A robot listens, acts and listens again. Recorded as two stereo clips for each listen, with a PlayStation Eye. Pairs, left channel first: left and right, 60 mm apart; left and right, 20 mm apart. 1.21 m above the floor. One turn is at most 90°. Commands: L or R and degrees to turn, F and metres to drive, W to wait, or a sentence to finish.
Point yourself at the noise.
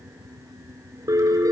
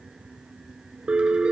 R90
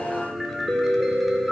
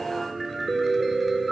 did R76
Facing the piano.